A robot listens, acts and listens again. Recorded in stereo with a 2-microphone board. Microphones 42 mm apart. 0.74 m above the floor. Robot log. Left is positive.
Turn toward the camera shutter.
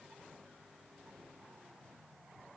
cmd idle
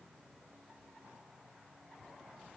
cmd idle
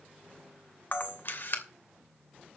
note: The camera shutter: about 60° left or 120° left.
cmd yaw +60
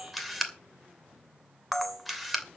end: Facing the camera shutter, 2 to 4 m away.